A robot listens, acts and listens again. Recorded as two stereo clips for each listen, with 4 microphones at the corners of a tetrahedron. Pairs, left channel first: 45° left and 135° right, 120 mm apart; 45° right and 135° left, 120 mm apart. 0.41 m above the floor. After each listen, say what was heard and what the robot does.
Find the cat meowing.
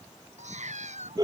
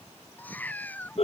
The cat meowing: 120° right. Turn 120° right.
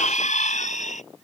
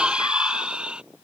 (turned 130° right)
Nothing new. It was at 10° left. Turn 10° left.
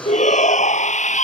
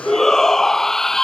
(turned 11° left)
Keep listening.
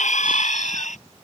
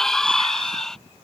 I heard a cat meowing from this way, but can't make it out now.